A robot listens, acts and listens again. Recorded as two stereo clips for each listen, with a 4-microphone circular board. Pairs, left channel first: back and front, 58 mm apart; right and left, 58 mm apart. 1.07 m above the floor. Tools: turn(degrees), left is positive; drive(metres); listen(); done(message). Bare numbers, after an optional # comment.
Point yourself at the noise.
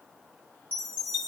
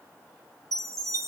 # The chime: 60° left.
turn(60)
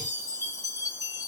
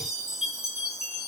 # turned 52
# The chime is now 10° left.
turn(10)
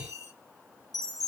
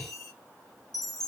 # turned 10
done("Facing the chime, 1 to 2 m away.")